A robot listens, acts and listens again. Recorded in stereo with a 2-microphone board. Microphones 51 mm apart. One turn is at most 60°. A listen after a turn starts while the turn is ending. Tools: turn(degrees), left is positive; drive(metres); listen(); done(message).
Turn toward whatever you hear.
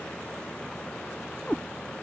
turn(degrees=25)
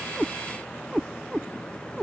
done("Found it: a cat meowing, straight ahead.")